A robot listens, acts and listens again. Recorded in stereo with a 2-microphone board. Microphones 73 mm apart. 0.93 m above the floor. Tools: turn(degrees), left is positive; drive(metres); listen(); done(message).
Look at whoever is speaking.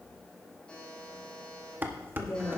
turn(degrees=70)
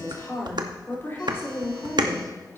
turn(degrees=35)
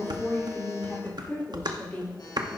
turn(degrees=25)
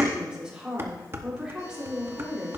turn(degrees=-10)
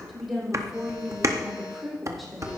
done("Found it: a woman speaking, straight ahead.")